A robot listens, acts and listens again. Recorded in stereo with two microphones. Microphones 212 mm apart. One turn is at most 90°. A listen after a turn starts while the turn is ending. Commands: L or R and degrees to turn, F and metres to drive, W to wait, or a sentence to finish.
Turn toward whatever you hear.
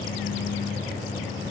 W
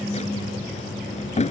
L35
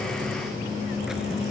W
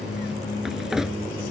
Found it: a drawer, straight ahead.